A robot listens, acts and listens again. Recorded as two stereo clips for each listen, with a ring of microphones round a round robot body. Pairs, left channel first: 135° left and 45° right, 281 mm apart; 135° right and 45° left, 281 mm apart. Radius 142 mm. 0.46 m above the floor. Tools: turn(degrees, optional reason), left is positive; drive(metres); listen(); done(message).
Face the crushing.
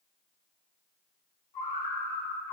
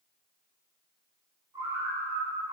listen()
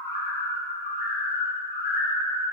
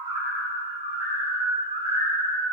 listen()
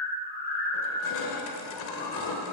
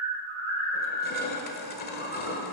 turn(degrees=170, reason="The crushing: 170° left.")
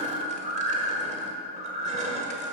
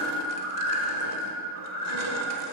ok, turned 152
turn(degrees=20, reason="Nothing new. It was at 20° left.")
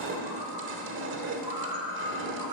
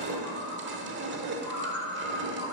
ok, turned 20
done("Facing the crushing.")